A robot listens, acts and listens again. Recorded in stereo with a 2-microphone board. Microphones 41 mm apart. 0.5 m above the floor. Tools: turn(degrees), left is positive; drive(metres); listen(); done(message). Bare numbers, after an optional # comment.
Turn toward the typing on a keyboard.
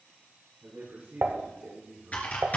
# The typing on a keyboard: about 35° left or 145° left.
turn(35)
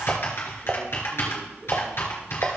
# So it is at 110° left.
turn(110)
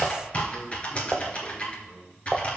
# The typing on a keyboard is now 35° left.
turn(35)
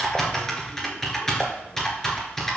# The typing on a keyboard is now 15° left.
turn(15)
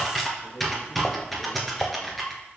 done("Facing the typing on a keyboard.")